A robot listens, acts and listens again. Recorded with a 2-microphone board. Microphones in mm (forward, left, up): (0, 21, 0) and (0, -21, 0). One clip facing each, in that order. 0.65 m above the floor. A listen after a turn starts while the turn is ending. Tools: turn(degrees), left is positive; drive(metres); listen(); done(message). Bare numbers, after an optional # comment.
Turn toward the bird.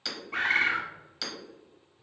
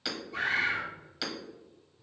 # The bird: about 60° left or 120° left.
turn(60)
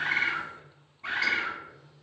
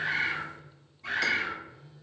# So it is at 40° left.
turn(40)
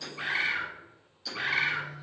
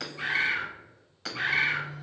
done("Found it: a bird, straight ahead, under 1 m away.")